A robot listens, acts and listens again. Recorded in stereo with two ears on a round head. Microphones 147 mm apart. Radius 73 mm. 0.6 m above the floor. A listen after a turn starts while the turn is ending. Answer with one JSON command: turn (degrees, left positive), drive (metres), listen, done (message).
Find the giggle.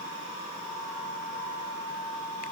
{"listen": true}
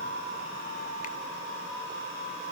{"listen": true}
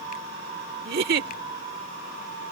{"turn": -65}
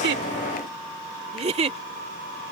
{"turn": -40}
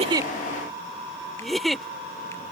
{"done": "Facing the giggle."}